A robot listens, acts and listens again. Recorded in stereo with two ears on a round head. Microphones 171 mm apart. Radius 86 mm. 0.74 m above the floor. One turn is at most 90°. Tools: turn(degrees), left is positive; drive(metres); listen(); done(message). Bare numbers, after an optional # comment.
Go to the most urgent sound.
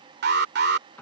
# The alarm: about 55° right or 125° right.
turn(-55)
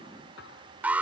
# So it is at 10° right.
turn(-10)
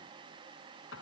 listen()
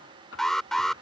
drive(1.0)
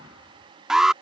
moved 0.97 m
drive(1.0)
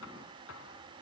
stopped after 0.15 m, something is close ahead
listen()
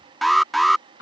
done("I am next to the alarm.")